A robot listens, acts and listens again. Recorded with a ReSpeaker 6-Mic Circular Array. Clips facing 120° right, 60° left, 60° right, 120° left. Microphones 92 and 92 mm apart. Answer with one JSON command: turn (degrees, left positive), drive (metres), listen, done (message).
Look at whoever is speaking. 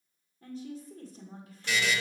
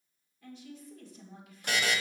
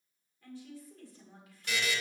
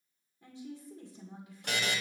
{"turn": -170}
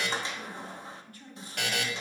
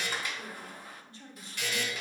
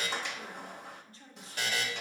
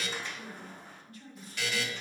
{"done": "Found it: a woman speaking, straight ahead, 1 to 2 m away."}